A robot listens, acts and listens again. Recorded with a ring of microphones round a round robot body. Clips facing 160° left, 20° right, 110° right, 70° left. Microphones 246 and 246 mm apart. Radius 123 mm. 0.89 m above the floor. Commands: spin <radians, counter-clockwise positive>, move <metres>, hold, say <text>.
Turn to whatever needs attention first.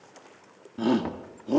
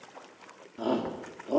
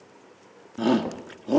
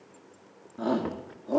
spin -2.62
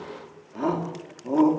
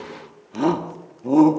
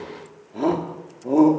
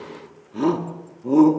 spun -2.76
say Facing the shout.